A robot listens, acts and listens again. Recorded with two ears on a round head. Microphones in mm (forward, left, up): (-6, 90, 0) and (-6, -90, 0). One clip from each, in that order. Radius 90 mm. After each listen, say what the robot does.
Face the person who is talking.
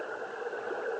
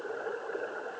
Keep listening.
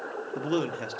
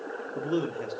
Turn 25° left.
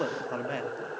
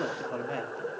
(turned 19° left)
Turn 10° left.
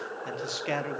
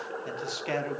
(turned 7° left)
Found it: a man speaking, straight ahead, under 1 m away.